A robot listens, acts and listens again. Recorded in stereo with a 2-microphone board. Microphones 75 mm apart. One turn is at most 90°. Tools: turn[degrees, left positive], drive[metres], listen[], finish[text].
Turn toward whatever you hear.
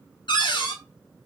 Action: turn[90]
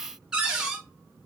Thought: So it is at 10° right.
Action: turn[-10]
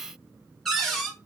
Action: finish[Facing the cupboard door, under 1 m away.]